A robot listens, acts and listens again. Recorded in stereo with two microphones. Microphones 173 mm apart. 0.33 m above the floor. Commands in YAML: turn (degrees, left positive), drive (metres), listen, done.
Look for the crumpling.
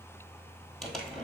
turn: 30
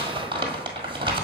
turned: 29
turn: -25
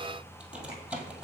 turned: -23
done: "Facing the crumpling, 1 to 2 m away."